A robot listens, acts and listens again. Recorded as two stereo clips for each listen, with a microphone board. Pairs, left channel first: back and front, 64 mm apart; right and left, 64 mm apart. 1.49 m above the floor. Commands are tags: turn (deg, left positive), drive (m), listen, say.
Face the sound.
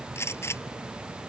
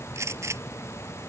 <turn deg="130"/>
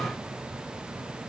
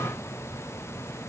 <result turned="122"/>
<turn deg="10"/>
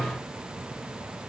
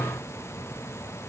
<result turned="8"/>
<say>Facing where the gunshot came from. I can't hear it now.</say>